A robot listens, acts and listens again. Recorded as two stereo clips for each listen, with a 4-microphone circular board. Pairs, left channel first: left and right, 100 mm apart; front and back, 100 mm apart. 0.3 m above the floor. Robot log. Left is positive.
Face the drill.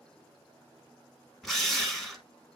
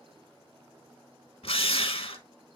end: Found it: a drill, straight ahead.